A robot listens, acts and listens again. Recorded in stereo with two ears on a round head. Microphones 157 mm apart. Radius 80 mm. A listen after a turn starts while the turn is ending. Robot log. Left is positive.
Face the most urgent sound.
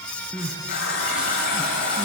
cmd yaw -30
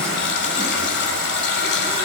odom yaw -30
cmd idle
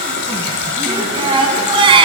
note: So it is at 145° right.
cmd yaw -145
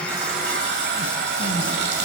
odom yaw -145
cmd idle
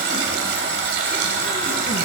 cmd idle
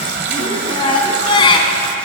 note: The crying is now 30° left.
cmd yaw +30
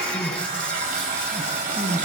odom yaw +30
end: Found it: crying, straight ahead, 1 to 2 m away.